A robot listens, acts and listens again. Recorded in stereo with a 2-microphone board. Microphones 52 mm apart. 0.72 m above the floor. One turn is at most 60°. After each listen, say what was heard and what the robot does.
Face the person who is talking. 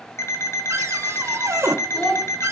The child speaking: about 20° left or 160° left. Turn 20° left.
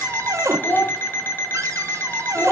So it is at 140° left. Turn 60° left.
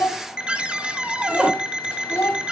The child speaking is now 70° left. Turn 60° left.
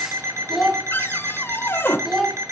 Found it: a child speaking, straight ahead, over 4 m away.